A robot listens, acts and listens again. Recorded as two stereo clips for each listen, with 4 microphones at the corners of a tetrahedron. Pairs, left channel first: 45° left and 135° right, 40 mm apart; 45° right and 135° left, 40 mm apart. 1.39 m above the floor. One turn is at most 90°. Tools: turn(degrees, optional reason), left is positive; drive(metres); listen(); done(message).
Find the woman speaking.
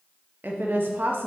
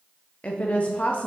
turn(degrees=-90, reason="The woman speaking: 105° right.")
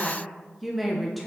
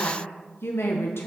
turn(degrees=-45, reason="The woman speaking is now 45° right.")
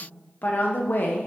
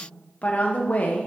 done("Found it: a woman speaking, straight ahead.")